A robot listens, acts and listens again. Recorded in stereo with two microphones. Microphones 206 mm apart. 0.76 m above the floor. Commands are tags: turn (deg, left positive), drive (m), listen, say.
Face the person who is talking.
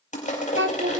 <turn deg="-70"/>
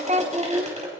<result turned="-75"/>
<turn deg="-35"/>
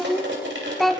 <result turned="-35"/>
<say>Found it: a child speaking, straight ahead.</say>